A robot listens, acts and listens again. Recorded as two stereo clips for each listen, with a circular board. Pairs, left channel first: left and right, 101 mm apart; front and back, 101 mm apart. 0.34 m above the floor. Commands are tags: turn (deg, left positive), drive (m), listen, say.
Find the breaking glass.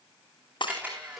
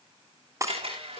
<turn deg="120"/>
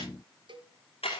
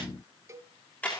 <say>Facing where the breaking glass came from. I can't hear it now.</say>